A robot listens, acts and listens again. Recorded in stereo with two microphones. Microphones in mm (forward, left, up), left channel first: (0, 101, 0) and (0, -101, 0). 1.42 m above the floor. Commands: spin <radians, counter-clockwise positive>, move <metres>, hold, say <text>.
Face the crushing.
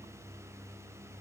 hold
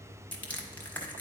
spin 0.52
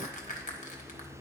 spin 2.44
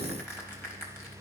spin 0.17
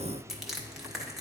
say Found it: crushing, straight ahead.